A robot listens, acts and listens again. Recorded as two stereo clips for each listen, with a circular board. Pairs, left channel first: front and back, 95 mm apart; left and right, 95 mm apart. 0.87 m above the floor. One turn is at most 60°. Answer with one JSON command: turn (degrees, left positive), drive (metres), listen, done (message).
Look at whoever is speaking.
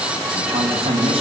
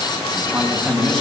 {"turn": 60}
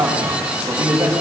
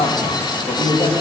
{"turn": 60}
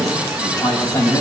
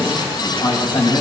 {"turn": 50}
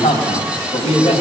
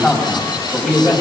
{"done": "Found it: a man speaking, straight ahead."}